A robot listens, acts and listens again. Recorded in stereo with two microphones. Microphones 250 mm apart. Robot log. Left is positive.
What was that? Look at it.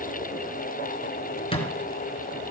note: The thud: about 20° left or 160° left.
cmd yaw +20
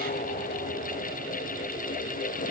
cmd idle
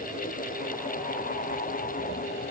end: I heard a thud, but can't make it out now. It was about straight ahead or 140° left.